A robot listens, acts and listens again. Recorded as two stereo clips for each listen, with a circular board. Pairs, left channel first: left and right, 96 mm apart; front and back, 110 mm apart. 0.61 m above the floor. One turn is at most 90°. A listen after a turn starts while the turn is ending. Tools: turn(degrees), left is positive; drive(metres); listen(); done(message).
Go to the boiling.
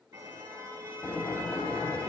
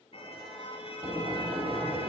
turn(degrees=90)
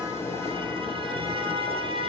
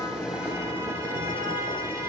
turn(degrees=70)
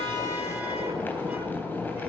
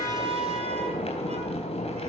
turn(degrees=20)
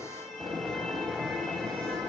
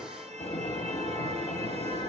drive(metres=1.0)
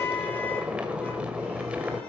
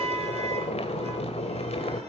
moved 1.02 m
turn(degrees=-15)
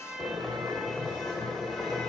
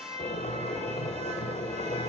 drive(metres=1.0)
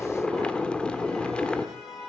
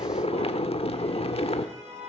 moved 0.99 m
turn(degrees=10)
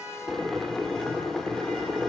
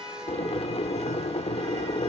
drive(metres=1.0)
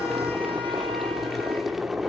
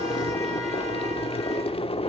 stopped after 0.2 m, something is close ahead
done("I am next to the boiling.")